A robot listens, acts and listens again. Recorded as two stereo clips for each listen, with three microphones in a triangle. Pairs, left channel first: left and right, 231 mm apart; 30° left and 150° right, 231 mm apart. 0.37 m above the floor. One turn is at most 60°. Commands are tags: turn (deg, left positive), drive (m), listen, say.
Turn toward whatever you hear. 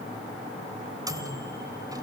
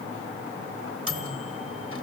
<turn deg="-60"/>
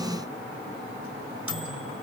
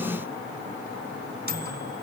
<turn deg="-60"/>
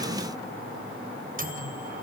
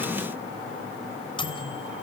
<turn deg="-40"/>
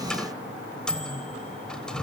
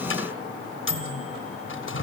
<say>Facing the microwave.</say>